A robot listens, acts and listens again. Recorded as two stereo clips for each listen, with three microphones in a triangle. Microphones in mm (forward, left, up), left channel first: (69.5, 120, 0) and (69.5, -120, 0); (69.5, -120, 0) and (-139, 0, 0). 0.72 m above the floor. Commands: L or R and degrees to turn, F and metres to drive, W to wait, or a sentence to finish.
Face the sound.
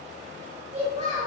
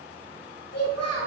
R35
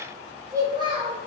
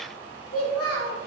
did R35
R25
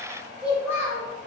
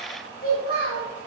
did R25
R15
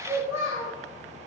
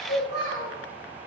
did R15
R15
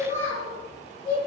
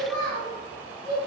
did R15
R15
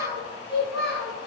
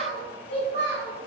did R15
Found it: a child speaking, straight ahead.